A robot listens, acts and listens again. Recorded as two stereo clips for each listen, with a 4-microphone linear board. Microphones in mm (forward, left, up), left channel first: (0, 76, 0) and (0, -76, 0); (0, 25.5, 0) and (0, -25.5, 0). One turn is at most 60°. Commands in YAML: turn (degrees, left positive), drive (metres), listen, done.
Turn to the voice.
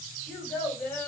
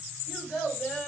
turn: 30
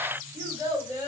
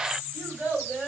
turn: -25
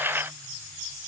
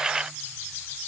listen: true
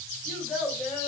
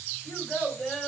done: "Found it: a child speaking, straight ahead."